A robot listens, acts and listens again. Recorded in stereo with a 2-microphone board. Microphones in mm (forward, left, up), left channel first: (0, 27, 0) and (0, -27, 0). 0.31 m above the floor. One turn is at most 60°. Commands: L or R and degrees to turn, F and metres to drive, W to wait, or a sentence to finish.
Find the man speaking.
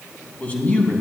L35
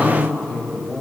L15
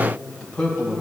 L20
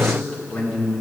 L20
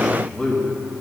Facing the man speaking.